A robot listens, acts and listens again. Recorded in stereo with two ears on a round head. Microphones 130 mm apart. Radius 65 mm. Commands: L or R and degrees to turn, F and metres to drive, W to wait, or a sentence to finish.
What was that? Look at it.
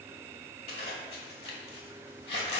L40
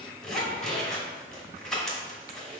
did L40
Facing the zipper.